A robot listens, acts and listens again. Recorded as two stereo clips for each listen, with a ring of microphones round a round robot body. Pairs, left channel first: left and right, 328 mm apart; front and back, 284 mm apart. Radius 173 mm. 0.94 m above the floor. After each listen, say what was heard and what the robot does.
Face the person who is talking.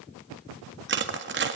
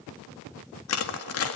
Keep listening.
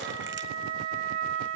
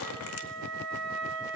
Keep listening.
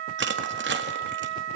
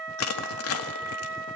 I can't make out anyone speaking to turn to.